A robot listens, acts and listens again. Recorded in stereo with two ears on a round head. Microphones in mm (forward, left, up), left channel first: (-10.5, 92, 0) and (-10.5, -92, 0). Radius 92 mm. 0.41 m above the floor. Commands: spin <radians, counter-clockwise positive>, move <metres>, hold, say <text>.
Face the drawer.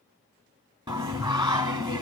hold
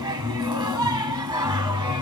hold
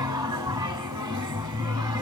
say I can't make out a drawer, only singing.